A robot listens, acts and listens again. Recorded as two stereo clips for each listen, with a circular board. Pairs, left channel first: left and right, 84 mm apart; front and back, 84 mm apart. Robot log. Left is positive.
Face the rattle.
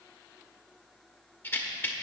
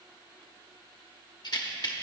note: The rattle: 25° left.
cmd yaw +25
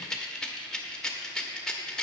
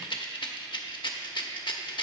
note: The rattle is now 10° left.
cmd yaw +10
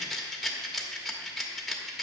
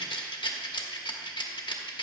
end: Facing the rattle, under 1 m away.